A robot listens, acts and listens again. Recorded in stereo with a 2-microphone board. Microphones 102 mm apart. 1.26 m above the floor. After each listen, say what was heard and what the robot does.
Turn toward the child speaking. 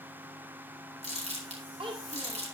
The child speaking: about 60° right or 120° right. Turn 60° right.
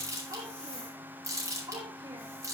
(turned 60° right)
So it is at 40° right. Turn 40° right.
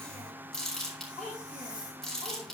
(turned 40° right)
Facing the child speaking.